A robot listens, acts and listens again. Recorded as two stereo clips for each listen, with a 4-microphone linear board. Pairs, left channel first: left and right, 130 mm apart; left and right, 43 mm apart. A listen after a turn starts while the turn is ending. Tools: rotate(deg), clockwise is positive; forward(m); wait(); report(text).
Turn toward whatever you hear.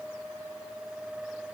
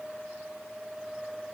wait()
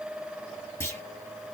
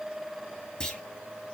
rotate(-20)
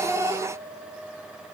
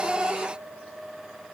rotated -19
wait()
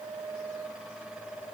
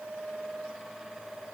report("I heard a clunk, but can't make it out now. It was about straight ahead or 145° left.")